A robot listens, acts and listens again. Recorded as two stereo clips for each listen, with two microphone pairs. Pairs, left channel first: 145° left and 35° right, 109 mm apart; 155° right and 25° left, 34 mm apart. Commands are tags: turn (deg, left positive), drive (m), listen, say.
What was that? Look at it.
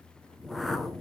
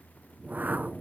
<turn deg="55"/>
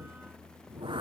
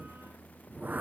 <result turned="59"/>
<say>Facing the whoosh.</say>